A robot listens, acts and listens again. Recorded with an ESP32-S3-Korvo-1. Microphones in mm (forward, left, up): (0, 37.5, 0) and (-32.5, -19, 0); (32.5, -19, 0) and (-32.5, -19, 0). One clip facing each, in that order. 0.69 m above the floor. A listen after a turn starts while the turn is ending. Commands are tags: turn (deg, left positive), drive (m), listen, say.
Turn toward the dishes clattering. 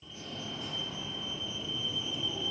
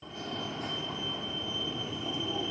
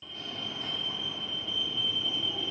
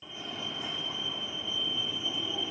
<listen/>
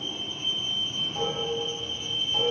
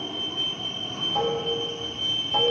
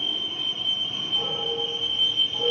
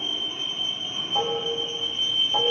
<turn deg="-160"/>
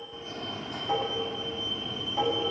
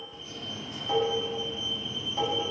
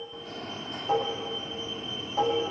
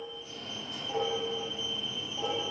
<turn deg="-15"/>
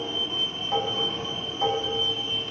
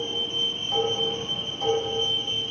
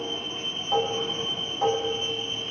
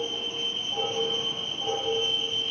<say>Found it: dishes clattering, straight ahead, 2 to 4 m away.</say>